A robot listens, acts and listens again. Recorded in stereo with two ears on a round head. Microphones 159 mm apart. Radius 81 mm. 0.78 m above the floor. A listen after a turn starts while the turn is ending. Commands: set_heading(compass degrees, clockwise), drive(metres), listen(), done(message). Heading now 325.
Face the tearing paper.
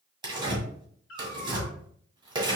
set_heading(355)
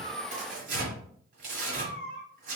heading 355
set_heading(120)
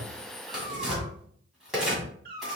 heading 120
done("Facing the tearing paper.")